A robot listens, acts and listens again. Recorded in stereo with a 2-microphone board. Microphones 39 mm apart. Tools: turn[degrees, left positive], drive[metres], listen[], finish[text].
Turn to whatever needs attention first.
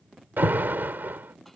Thought: The alarm: about 70° right or 110° right.
Action: turn[-70]
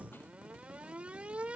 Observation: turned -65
Thought: So it is at 35° right.
Action: turn[-35]
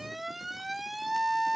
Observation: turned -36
Action: finish[Facing the alarm.]